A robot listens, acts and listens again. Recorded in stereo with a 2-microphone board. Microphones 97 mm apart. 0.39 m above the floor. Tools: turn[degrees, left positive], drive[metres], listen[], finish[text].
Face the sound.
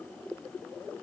Action: listen[]
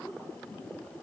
Action: listen[]
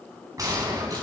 Thought: The gunshot: about 40° right or 140° right.
Action: turn[-40]
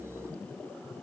Action: listen[]
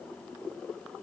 Action: finish[I heard a gunshot, but can't make it out now. It was about straight ahead or 100° right.]